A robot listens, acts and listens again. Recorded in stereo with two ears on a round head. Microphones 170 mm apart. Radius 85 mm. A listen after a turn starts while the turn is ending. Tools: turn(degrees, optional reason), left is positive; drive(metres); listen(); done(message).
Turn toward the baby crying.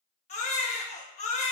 turn(degrees=35, reason="The baby crying: about 35° left or 145° left.")
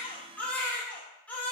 turn(degrees=10, reason="So it is at 10° left.")
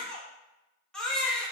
done("Found it: a baby crying, straight ahead.")